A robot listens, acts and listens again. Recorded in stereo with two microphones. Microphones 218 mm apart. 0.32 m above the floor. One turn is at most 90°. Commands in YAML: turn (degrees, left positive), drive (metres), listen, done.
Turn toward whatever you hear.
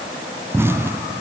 turn: -30
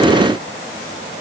listen: true
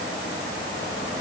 done: "I heard an explosion, but can't make it out now. It was about 20° left or 140° right."